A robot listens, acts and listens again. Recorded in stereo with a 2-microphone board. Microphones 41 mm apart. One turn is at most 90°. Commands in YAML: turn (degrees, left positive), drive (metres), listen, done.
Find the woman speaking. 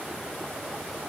listen: true
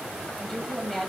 turn: 30
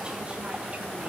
listen: true
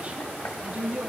turn: -40
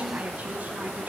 turn: -40
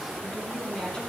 turn: 25
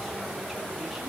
listen: true
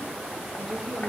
listen: true
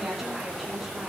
done: "Found it: a woman speaking, straight ahead."